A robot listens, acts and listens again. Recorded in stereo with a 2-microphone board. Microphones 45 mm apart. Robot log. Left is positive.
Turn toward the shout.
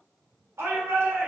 cmd yaw -90
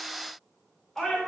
note: So it is at 10° left.
cmd yaw +10
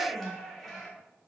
end: Facing the shout, 2 to 4 m away.